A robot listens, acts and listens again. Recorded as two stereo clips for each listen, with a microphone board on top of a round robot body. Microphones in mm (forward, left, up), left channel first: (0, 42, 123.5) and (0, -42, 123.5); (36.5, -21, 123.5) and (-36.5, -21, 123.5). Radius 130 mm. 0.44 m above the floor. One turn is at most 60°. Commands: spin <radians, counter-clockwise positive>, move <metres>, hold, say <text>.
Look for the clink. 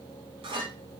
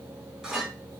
spin -1.05
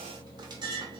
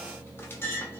spin -1.05
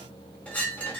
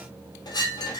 spin 0.26
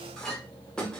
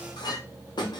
say Facing the clink, under 1 m away.